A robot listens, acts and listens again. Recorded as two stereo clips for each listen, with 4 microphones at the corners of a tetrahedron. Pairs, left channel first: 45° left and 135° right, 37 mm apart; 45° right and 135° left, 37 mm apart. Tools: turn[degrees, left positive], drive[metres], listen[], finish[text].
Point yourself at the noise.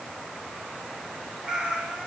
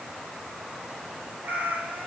Thought: The cat meowing: 160° left.
Action: turn[160]
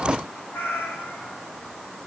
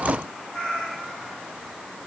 Thought: The cat meowing is now 25° left.
Action: turn[25]
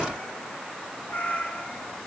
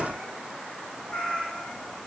Thought: The cat meowing is now 10° left.
Action: turn[10]
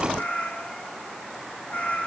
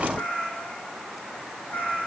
Action: finish[Found it: a cat meowing, straight ahead, 2 to 4 m away.]